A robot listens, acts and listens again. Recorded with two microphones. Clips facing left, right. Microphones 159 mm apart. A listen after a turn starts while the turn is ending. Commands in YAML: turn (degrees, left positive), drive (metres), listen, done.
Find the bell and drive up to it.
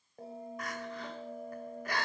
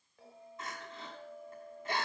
turn: 45
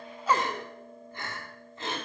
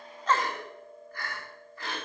drive: 1.0
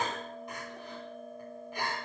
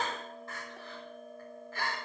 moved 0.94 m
drive: 1.0
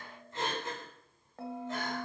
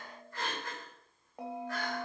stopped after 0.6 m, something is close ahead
turn: -15
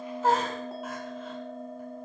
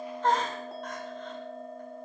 done: "Arrived at the bell, straight ahead."